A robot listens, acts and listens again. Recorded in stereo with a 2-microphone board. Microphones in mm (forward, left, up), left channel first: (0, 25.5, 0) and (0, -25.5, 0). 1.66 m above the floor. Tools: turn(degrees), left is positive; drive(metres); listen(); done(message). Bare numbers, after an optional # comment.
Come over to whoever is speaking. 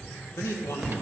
# The man speaking: about 65° left or 115° left.
turn(65)
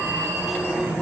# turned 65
listen()
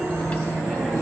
listen()
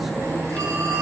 done("I heard a man speaking, but can't make it out now. It was about straight ahead or 50° left. I did not reach it.")